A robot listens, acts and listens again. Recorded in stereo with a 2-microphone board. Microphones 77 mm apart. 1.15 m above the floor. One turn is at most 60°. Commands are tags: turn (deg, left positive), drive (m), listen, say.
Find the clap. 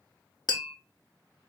<listen/>
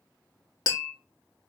<listen/>
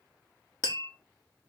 <say>I can't make out a clap to turn to.</say>